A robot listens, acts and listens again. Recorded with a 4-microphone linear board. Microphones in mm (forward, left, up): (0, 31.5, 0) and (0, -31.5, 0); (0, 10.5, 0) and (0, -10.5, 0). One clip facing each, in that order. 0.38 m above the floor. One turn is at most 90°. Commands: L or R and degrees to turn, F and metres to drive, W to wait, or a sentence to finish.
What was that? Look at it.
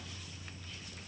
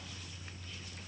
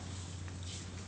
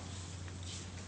W
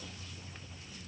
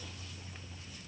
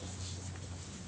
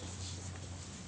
W
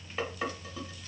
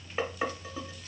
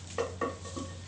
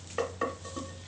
R20
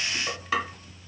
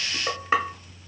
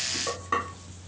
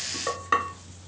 R90
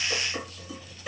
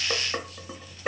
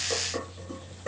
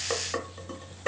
R60
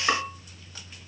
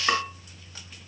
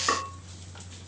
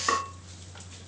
Found it: dishes clattering, straight ahead, under 1 m away.